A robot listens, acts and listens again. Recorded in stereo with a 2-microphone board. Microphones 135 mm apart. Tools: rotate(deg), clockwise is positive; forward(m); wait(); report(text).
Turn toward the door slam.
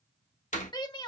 rotate(-70)
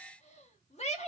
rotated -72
wait()
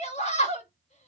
report("I heard a door slam, but can't make it out now. It was about 5° right or 40° left.")